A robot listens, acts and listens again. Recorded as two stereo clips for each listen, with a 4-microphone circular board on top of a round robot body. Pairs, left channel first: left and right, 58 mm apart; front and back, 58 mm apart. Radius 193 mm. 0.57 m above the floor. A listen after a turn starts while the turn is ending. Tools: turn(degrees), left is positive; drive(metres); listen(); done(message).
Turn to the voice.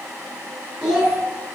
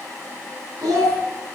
turn(degrees=180)
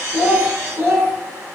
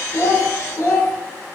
turn(degrees=-45)
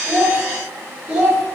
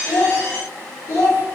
turn(degrees=-20)
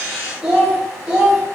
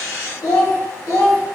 turn(degrees=-10)
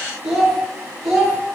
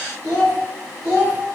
done("Facing the child speaking.")